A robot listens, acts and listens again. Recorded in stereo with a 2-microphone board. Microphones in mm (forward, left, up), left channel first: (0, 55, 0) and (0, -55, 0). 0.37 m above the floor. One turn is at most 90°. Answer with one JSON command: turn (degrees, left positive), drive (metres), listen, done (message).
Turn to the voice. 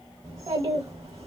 {"turn": -35}
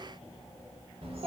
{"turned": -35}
{"turn": -90}
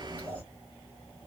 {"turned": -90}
{"turn": -25}
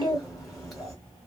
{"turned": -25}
{"done": "Facing the child speaking, 1 to 2 m away."}